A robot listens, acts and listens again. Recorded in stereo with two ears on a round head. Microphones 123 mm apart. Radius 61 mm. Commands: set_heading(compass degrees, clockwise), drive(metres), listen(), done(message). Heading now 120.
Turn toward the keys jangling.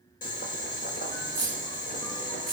set_heading(90)
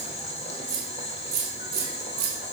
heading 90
set_heading(130)
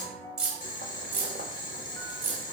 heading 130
set_heading(145)
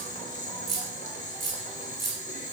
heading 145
done("Facing the keys jangling.")